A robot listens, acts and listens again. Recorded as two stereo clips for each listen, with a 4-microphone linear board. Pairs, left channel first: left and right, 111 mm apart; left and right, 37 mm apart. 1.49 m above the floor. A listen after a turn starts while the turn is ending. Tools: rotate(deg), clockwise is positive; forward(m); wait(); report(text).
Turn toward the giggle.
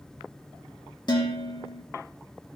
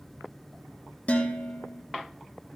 wait()
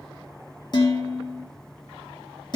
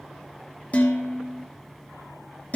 wait()
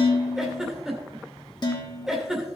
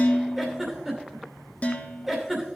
rotate(30)
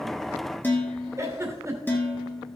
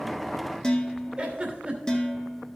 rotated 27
rotate(150)
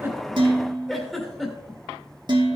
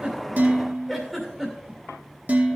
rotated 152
report("Facing the giggle, 2 to 4 m away.")